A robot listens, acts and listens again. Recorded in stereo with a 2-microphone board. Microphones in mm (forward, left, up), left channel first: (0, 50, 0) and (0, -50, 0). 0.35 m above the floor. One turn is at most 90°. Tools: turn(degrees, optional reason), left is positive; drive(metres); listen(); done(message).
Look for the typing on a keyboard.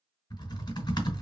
turn(degrees=45, reason="The typing on a keyboard: about 45° left or 135° left.")
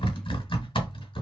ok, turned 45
turn(degrees=75, reason="So it is at 75° left.")
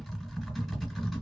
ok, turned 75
done("Found it: typing on a keyboard, straight ahead.")